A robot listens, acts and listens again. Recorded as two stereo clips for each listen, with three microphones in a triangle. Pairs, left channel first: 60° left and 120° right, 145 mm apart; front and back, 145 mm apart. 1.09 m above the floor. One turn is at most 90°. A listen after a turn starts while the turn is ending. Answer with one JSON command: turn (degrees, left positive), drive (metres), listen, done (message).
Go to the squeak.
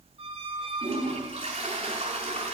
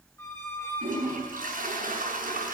{"turn": -75}
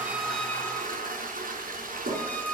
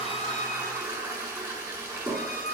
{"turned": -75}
{"turn": -20}
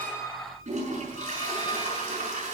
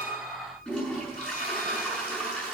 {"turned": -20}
{"listen": true}
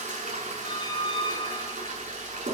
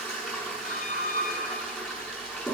{"drive": 1.0}
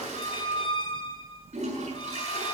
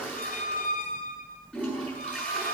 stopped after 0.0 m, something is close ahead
{"done": "Something is in my way. I am facing the squeak but have not reached it."}